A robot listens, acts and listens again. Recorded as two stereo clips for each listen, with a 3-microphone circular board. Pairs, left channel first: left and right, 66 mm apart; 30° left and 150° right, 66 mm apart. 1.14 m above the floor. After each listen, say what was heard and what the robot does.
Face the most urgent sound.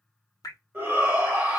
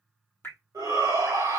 The shout: 150° right. Turn 150° right.
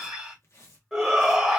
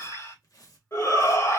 Found it: a shout, straight ahead, 1 to 2 m away.